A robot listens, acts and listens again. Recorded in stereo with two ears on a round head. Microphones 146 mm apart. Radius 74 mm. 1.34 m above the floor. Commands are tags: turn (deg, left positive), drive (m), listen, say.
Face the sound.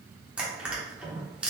<turn deg="-30"/>
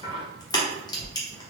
<turn deg="25"/>
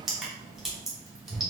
<say>Found it: crushing, straight ahead.</say>